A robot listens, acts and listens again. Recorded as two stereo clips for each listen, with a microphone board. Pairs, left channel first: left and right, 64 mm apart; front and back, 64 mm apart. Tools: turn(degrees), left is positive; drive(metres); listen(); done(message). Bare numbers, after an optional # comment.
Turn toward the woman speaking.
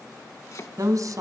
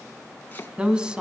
# The woman speaking: 105° right.
turn(-105)
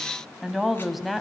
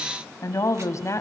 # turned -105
done("Facing the woman speaking, 2 to 4 m away.")